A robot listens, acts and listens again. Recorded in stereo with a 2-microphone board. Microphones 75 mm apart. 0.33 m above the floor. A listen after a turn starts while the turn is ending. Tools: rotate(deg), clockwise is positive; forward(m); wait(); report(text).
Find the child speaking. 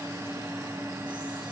wait()
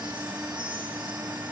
wait()
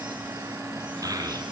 rotate(50)
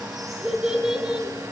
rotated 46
rotate(10)
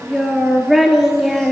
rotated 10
report("Facing the child speaking, 2 to 4 m away.")